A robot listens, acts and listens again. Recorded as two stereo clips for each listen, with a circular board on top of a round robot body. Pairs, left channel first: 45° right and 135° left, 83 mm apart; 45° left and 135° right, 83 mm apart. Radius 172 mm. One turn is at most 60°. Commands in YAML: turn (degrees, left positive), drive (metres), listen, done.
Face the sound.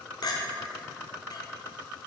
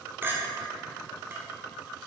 turn: -60
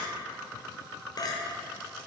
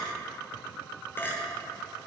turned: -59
turn: -15
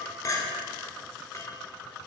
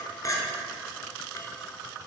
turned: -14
done: "Facing the clink."